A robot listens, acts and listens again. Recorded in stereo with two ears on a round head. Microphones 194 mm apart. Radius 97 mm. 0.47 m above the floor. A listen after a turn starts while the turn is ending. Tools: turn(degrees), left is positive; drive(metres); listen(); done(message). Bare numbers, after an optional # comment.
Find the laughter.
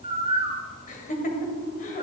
# The laughter: about 40° left or 140° left.
turn(40)
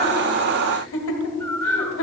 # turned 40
# So it is at 100° left.
turn(100)
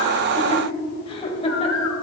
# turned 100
# The laughter is now 30° left.
turn(30)
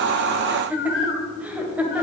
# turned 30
# The laughter is now 10° right.
turn(-10)
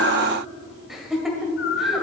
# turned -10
done("Facing the laughter, 1 to 2 m away.")